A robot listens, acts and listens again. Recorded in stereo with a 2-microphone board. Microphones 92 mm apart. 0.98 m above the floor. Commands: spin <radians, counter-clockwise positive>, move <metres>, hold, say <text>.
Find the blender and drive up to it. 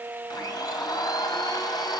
spin 0.79
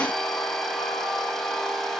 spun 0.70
move 1.0
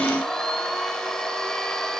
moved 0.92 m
move 1.0
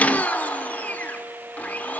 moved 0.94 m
spin 0.35
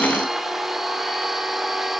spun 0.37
move 1.0
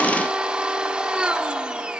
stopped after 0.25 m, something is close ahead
spin -0.17
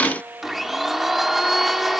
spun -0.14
say I am next to the blender.